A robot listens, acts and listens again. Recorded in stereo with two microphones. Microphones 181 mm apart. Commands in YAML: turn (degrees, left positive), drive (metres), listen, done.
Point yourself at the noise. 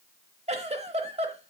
turn: -35
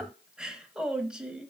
done: "Facing the giggle."